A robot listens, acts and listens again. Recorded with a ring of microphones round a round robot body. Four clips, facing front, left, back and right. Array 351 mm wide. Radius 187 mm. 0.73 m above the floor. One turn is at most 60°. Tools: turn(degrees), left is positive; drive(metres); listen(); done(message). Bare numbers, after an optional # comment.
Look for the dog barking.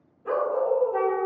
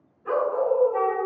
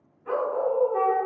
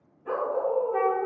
# The dog barking: 20° left.
turn(20)
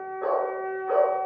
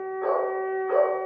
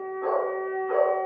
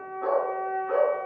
done("Facing the dog barking.")